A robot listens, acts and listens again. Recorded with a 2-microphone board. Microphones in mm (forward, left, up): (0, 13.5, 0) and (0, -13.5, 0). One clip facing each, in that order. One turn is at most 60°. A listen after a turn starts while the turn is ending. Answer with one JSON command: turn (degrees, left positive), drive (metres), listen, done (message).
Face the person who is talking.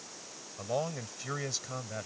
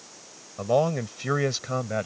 {"turn": -35}
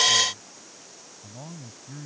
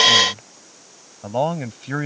{"turn": -60}
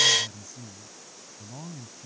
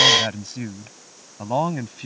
{"turn": -60}
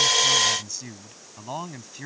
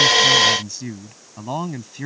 {"turn": -10}
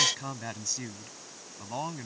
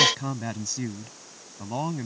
{"done": "Facing the man speaking."}